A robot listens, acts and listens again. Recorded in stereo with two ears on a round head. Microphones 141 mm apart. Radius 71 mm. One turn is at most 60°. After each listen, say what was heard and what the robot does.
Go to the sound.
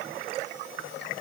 Keep listening.
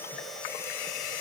Keep listening.
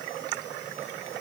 I can't make out anything.